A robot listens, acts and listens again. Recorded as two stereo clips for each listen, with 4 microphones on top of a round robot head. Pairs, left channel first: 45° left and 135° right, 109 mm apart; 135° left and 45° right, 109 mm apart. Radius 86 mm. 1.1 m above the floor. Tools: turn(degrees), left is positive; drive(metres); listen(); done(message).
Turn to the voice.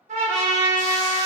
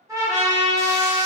listen()
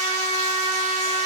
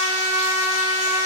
listen()
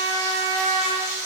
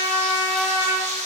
done("I can't make out anyone speaking, only a trumpet and frying.")